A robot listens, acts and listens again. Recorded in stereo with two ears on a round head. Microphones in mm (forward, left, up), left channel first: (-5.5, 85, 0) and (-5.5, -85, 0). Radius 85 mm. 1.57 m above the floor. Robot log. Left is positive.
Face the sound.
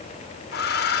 note: The hair dryer: about 55° left or 125° left.
cmd yaw +55
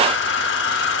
note: So it is at 70° left.
cmd yaw +70
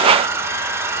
note: The hair dryer is now 15° right.
cmd yaw -15
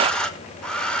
end: Facing the hair dryer, 1 to 2 m away.